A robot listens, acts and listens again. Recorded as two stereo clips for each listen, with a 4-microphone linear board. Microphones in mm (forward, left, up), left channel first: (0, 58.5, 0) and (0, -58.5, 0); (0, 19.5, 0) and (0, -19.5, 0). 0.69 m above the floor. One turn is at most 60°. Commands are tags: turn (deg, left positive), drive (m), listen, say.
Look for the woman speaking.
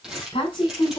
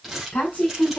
<turn deg="50"/>
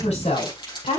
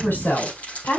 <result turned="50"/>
<turn deg="60"/>
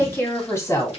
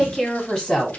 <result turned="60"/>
<turn deg="25"/>
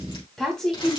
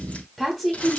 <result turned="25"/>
<say>Found it: a woman speaking, straight ahead, 2 to 4 m away.</say>